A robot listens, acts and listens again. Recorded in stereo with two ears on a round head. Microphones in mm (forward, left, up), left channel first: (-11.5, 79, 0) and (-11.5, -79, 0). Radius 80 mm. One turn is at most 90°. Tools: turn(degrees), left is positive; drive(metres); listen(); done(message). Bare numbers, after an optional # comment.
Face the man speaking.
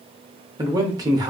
# The man speaking: about 20° right or 160° right.
turn(-20)
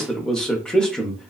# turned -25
done("Found it: a man speaking, straight ahead.")